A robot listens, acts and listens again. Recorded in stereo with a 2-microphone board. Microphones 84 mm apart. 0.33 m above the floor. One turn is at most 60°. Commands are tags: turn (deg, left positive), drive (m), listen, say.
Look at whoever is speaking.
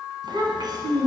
<turn deg="-55"/>
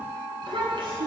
<turn deg="-60"/>
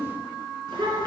<turn deg="-60"/>
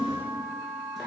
<say>Found it: a child speaking, straight ahead.</say>